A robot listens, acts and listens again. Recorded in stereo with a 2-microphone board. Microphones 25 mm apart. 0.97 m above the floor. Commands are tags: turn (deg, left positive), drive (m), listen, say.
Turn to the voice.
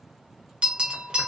<listen/>
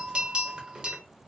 <listen/>
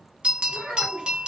<turn deg="-45"/>
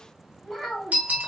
<say>Facing the child speaking, 1 to 2 m away.</say>